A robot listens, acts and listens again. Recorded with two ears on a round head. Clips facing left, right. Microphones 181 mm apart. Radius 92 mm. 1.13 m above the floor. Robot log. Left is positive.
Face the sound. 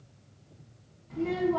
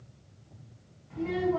note: The child speaking: about 55° left or 125° left.
cmd yaw +55
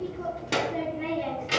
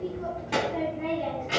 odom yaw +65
note: So it is at 45° left.
cmd yaw +45
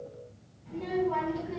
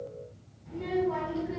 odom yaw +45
end: Found it: a child speaking, straight ahead.